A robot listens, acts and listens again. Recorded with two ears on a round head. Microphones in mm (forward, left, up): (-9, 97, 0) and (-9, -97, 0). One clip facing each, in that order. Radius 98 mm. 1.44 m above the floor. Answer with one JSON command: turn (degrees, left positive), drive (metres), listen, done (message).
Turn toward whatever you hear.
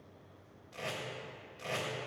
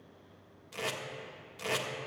{"turn": -65}
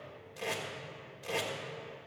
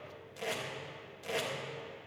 {"done": "Found it: tape being pulled, straight ahead."}